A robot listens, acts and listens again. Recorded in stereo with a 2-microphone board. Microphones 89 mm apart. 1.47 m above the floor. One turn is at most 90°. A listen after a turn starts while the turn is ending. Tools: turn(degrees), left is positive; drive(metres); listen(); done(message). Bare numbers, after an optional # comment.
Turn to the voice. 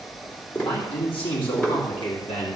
turn(90)
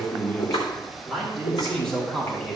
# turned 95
# So it is at 10° left.
turn(10)
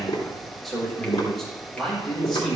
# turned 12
done("Facing the man speaking, over 4 m away.")